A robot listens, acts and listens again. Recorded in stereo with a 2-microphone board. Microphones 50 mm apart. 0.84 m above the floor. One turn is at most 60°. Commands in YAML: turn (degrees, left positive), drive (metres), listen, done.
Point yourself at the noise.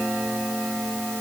listen: true
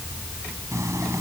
turn: -60
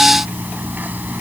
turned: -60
turn: -40
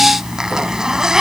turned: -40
turn: -15
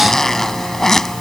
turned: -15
done: "Found it: a zipper, straight ahead."